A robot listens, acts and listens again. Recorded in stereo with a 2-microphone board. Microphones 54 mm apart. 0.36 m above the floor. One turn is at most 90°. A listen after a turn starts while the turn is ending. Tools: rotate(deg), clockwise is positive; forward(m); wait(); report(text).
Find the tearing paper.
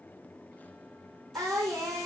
wait()
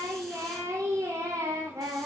wait()
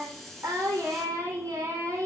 report("I can't make out tearing paper to turn to.")